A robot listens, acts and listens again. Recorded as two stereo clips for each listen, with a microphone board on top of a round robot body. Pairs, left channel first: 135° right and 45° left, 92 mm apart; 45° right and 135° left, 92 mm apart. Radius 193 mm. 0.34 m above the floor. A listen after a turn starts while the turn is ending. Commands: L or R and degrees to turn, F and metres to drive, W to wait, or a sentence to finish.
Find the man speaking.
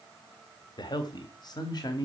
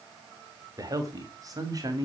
L180
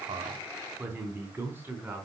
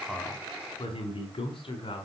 R25
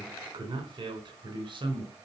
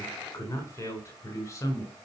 L10
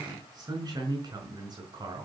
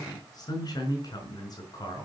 Facing the man speaking, over 4 m away.